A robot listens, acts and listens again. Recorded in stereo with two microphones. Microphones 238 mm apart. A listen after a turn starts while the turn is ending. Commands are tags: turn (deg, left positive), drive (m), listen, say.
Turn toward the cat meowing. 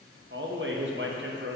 <listen/>
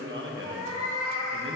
<turn deg="-40"/>
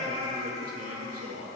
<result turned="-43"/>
<turn deg="-25"/>
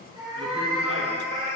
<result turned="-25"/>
<turn deg="-35"/>
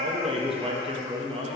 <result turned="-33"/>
<listen/>
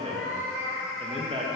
<turn deg="-10"/>
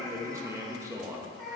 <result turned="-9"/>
<say>Facing the cat meowing, 1 to 2 m away.</say>